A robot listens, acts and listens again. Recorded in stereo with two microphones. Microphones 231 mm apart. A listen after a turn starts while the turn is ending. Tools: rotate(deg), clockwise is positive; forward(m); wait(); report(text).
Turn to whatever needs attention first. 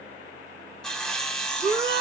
rotate(45)
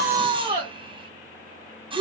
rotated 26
rotate(20)
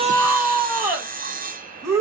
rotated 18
report("Facing the shout.")